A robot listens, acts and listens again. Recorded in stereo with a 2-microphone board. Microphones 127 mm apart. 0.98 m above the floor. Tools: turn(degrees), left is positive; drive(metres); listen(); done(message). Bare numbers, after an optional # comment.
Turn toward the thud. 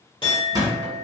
# The thud: about 35° right or 145° right.
turn(-35)
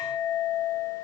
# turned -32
listen()
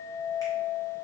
done("I heard a thud, but can't make it out now. It was about straight ahead or 115° right.")